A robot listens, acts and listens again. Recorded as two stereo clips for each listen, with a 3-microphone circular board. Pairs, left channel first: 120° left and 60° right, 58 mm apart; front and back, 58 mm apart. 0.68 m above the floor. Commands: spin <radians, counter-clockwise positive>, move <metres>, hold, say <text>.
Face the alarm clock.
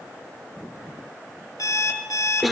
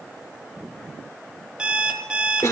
spin 1.83
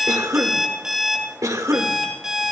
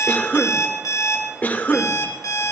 spin 0.35
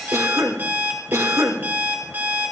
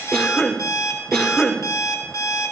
say Facing the alarm clock.